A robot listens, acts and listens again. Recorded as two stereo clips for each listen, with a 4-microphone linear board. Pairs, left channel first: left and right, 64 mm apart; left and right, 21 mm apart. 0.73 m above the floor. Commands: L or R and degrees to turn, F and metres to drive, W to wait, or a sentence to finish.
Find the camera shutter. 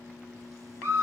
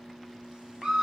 W
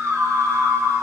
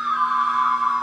W
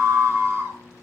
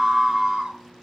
I can't make out a camera shutter to turn to.